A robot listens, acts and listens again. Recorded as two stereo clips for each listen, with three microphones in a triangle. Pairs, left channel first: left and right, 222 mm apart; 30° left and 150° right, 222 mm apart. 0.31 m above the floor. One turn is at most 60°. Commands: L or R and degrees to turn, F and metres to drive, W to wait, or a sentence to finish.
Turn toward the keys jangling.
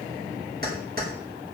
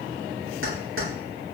R60
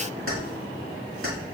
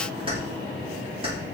R60
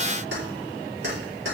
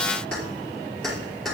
R60
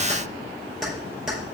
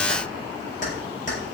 Found it: keys jangling, straight ahead, over 4 m away.